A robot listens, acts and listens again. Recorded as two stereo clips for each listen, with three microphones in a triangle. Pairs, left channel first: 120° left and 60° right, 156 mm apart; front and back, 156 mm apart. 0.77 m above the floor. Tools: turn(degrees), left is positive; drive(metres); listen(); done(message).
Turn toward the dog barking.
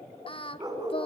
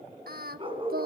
turn(degrees=-125)
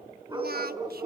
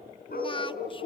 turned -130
done("Found it: a dog barking, straight ahead.")